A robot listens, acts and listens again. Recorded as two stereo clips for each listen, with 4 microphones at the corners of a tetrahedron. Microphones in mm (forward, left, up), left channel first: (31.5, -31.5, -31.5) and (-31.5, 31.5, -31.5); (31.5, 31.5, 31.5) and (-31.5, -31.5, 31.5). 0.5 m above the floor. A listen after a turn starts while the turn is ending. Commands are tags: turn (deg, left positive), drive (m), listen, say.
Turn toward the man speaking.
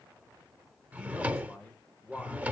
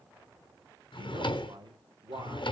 <turn deg="-120"/>
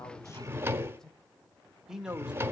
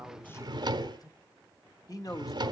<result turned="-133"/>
<turn deg="60"/>
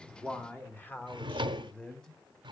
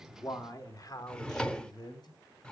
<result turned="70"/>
<turn deg="30"/>
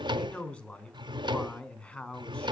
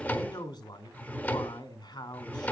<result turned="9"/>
<turn deg="25"/>
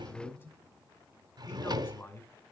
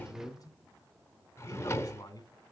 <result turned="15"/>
<turn deg="10"/>
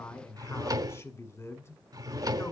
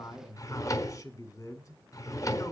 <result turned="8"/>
<say>Facing the man speaking, 2 to 4 m away.</say>